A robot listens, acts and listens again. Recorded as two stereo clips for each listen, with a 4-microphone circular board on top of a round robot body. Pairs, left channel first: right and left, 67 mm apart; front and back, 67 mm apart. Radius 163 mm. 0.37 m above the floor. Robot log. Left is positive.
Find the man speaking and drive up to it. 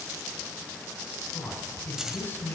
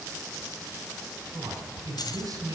note: The man speaking: 145° right.
cmd yaw -145
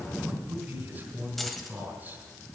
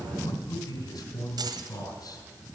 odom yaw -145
note: The man speaking is now 30° left.
cmd yaw +30
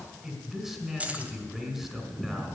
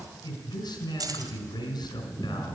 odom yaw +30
cmd fwd 1.0
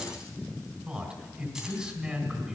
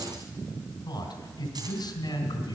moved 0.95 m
note: The man speaking is now 15° left.
cmd yaw +15
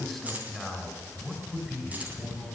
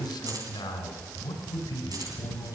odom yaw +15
cmd fwd 1.0
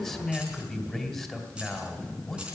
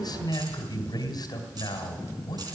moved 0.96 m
cmd fwd 1.0
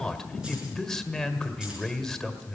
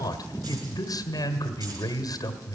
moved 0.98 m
note: The man speaking is now 10° right.
cmd yaw -10
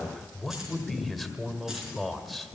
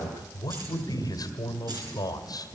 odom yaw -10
cmd fwd 1.0
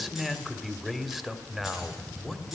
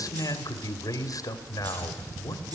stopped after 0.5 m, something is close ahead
end: Arrived at the man speaking, straight ahead.